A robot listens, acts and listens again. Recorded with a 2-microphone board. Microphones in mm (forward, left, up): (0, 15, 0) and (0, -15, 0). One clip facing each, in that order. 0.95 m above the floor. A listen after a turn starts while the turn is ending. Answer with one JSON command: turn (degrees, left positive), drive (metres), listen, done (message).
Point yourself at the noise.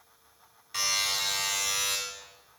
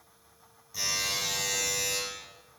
{"turn": 60}
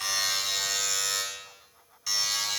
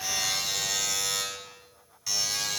{"done": "Facing the buzzer."}